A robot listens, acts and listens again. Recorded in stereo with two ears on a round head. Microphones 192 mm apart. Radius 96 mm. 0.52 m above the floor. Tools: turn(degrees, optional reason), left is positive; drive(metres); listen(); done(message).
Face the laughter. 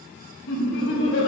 turn(degrees=65, reason="The laughter: about 65° left or 115° left.")
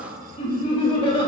turn(degrees=25, reason="So it is at 25° left.")
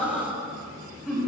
done("Facing the laughter.")